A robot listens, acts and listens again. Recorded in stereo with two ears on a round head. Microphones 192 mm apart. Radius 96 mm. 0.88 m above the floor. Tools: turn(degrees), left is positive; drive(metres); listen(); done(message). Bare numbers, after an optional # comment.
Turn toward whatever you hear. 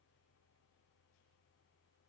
listen()
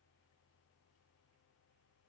listen()
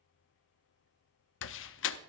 # The door slam: about 60° left or 120° left.
turn(60)
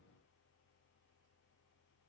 listen()
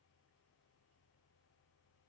done("I heard a door slam, but can't make it out now. It was about straight ahead or 60° left.")